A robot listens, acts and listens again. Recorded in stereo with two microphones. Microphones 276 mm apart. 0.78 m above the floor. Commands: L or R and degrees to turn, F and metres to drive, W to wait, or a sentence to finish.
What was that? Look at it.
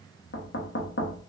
L45
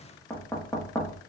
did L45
L10
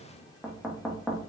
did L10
Facing the knocking, under 1 m away.